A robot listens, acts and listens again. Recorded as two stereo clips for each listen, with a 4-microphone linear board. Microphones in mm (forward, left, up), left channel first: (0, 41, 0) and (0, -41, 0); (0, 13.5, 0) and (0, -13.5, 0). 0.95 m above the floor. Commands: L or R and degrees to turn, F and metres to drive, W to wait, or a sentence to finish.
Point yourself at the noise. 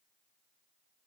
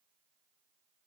W
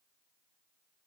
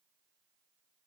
W
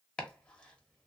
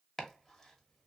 L30
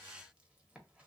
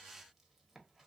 W
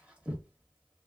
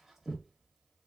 R15
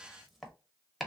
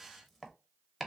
Found it: chopping, straight ahead.